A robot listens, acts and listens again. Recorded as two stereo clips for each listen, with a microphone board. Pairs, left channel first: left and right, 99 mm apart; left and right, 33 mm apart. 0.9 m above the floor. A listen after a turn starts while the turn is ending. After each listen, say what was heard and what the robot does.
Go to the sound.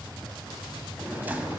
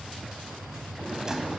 The drawer: about 20° right or 160° right. Turn 20° right.
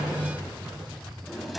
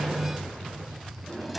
Drive 1.0 m forward.
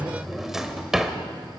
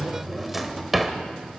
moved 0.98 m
Drive 1.0 m forward.
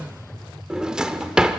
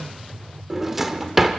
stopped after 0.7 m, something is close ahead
The drawer is now 10° right. Turn 10° right.
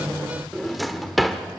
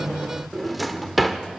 Arrived at the drawer, straight ahead.